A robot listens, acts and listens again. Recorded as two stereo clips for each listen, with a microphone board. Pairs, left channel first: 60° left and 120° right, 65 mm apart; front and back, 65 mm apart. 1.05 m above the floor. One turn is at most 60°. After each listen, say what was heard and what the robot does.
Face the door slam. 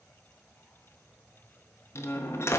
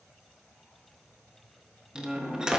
The door slam: 105° left. Turn 60° left.
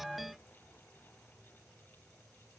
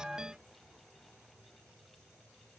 Nothing new. It was at 45° left. Turn 45° left.
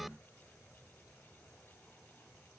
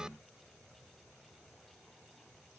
I heard a door slam from this way, but can't make it out now.